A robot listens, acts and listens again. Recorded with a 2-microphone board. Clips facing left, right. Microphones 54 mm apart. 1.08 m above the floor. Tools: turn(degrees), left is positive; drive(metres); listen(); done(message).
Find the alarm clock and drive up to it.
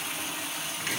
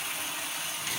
listen()
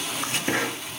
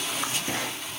listen()
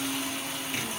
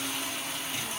done("I can't make out an alarm clock to turn to.")